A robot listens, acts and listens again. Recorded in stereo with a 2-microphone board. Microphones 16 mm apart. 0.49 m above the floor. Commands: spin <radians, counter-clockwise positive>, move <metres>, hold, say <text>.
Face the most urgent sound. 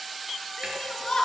spin 0.79
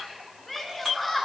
say Facing the shout.